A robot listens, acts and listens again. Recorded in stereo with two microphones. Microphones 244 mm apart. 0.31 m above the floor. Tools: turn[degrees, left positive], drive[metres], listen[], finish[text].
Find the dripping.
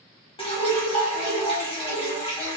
Thought: The dripping: about 20° left or 160° left.
Action: turn[20]
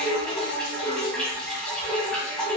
Action: finish[Found it: dripping, straight ahead.]